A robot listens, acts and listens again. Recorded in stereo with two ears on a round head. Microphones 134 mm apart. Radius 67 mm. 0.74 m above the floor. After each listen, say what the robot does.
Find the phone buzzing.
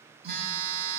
Turn 65° right.
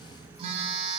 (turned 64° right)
Turn 40° right.
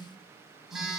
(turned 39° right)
Found it: a phone buzzing, straight ahead.